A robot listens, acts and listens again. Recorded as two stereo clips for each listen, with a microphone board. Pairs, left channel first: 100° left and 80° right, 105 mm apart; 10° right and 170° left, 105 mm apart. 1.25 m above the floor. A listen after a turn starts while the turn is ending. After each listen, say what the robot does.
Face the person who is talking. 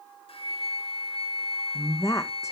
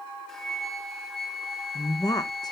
Turn 40° left.
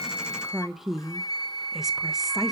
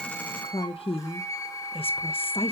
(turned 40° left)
Turn 10° left.
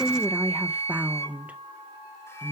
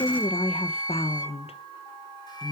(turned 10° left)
Facing the woman speaking.